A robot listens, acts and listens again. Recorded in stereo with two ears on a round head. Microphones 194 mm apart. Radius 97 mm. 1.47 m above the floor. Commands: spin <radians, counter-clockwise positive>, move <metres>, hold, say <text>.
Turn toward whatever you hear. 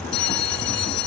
spin 1.57
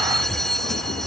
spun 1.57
say Facing the bell.